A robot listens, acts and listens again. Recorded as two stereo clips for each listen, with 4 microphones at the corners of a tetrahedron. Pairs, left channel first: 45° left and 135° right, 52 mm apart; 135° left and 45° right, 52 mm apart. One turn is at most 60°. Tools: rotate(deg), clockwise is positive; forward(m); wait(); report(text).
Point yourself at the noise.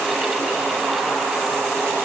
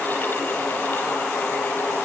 wait()
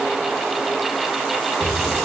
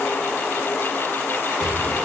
rotate(60)
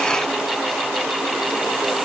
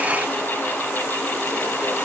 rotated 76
rotate(45)
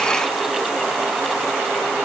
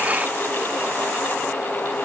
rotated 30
rotate(15)
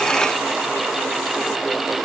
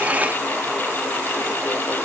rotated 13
report("I heard an explosion from this way, but can't make it out now.")